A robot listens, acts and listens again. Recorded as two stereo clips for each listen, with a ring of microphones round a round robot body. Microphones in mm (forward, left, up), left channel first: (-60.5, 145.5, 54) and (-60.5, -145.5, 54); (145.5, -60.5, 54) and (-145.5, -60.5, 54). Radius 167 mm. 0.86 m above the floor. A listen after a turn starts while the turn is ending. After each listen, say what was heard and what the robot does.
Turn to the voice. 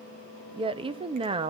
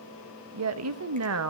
The woman speaking: 160° right. Turn 160° right.
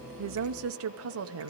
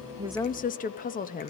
The woman speaking is now 60° right. Turn 60° right.
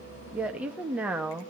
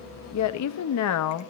Found it: a woman speaking, straight ahead, 1 to 2 m away.